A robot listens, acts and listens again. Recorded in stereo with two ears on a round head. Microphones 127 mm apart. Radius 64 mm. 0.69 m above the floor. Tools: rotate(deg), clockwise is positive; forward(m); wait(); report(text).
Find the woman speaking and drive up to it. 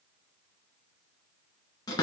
wait()
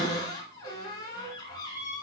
wait()
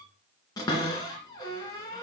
report("I can't make out a woman speaking, only a cupboard door.")